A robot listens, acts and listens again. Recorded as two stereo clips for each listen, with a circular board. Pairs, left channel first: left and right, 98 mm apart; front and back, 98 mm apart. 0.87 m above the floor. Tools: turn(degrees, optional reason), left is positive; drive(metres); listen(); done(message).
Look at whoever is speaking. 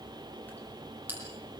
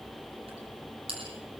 listen()
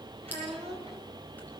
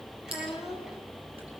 turn(degrees=-95, reason="The child speaking: 95° right.")
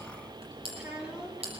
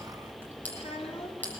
turn(degrees=-10, reason="The child speaking is now 10° right.")
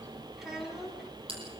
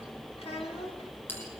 done("Facing the child speaking, over 4 m away.")